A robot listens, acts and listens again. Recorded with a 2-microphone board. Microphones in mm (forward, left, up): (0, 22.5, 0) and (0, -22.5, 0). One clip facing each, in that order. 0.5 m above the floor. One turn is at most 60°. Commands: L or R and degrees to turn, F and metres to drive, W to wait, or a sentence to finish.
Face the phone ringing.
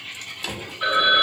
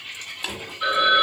L30
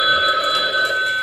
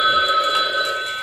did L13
L60
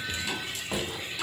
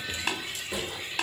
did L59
L60
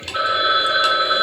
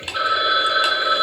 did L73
L25
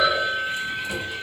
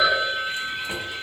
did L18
Found it: a phone ringing, straight ahead, 1 to 2 m away.